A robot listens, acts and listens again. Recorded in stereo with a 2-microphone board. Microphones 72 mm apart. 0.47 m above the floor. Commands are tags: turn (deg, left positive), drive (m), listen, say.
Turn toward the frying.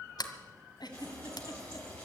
<turn deg="30"/>
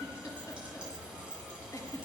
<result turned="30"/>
<turn deg="-15"/>
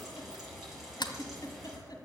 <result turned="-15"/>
<say>Found it: frying, straight ahead, over 4 m away.</say>